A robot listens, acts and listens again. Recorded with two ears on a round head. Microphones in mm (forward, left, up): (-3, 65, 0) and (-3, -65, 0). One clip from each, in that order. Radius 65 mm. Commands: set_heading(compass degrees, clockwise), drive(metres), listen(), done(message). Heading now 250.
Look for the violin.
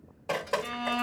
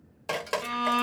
set_heading(305)
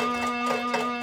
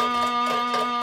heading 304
set_heading(9)
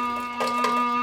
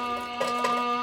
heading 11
done("Found it: a violin, straight ahead.")